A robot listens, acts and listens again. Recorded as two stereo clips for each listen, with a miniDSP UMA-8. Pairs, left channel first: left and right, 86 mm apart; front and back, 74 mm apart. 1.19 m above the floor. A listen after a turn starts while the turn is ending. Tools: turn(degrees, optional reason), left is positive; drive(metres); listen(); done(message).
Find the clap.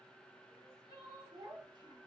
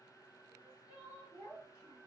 listen()
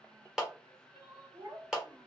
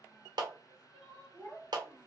turn(degrees=-175, reason="The clap: 175° right.")
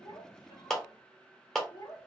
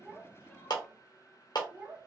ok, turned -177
done("Facing the clap, under 1 m away.")